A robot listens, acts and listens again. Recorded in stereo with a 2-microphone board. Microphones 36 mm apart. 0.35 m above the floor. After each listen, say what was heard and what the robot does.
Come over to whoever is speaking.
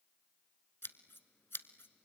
Keep listening.
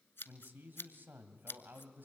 The man speaking: about 55° right or 125° right. Turn 55° right.
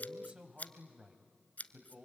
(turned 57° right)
So it is at 25° right. Turn 25° right.
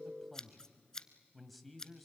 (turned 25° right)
Drive 1.0 m forward.
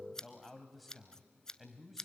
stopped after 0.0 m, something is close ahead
Blocked. The man speaking is further on, straight ahead.